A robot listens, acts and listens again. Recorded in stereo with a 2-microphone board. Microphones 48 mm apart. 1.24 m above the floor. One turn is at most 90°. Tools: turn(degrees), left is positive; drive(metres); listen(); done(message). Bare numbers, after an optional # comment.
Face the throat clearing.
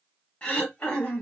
# The throat clearing: about 25° left or 155° left.
turn(25)
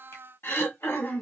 # So it is at 130° left.
turn(90)
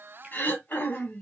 # The throat clearing is now 45° left.
turn(45)
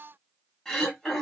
# The throat clearing is now 10° left.
turn(10)
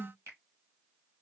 done("Found it: throat clearing, straight ahead, 1 to 2 m away.")